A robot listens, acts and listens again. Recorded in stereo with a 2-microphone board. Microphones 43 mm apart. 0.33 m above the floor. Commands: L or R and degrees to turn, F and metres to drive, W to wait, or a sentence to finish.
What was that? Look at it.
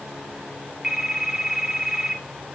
R30
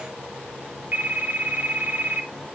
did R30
R135
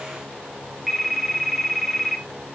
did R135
Found it: a phone ringing, straight ahead.